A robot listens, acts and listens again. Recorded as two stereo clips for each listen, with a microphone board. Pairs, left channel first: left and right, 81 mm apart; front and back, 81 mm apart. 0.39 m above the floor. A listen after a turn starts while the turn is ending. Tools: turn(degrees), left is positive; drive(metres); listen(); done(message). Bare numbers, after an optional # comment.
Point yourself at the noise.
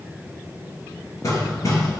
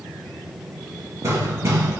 # The hammering: 130° left.
turn(130)
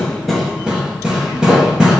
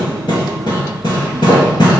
# The hammering is now 10° right.
turn(-10)
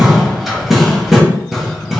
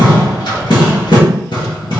done("Found it: hammering, straight ahead, 1 to 2 m away.")